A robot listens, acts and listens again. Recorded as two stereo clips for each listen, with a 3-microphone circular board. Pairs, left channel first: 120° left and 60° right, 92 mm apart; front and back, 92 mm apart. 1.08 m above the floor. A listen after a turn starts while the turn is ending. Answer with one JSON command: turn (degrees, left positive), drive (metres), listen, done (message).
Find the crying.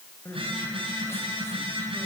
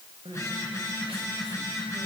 {"turn": 180}
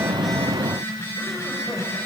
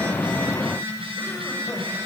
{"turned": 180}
{"listen": true}
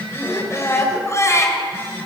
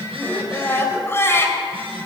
{"turn": 60}
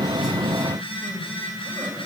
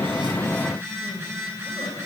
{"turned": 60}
{"listen": true}
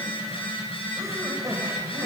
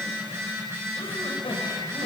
{"done": "Found it: crying, straight ahead, 2 to 4 m away."}